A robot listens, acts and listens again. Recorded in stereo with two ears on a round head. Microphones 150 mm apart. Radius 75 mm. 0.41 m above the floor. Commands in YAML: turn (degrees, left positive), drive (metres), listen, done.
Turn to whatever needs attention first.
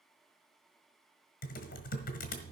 listen: true
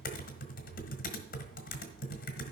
listen: true
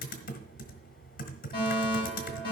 turn: 30
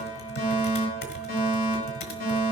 turn: 115
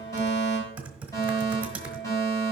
turn: 20
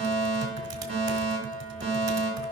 done: "Found it: a fire alarm, straight ahead."